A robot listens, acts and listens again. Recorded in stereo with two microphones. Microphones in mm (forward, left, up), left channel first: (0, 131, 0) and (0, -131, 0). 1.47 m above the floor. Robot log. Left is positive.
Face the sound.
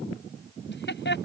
note: The laughter: about 45° left or 135° left.
cmd yaw +45
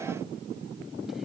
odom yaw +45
cmd idle
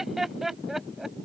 end: Found it: laughter, straight ahead.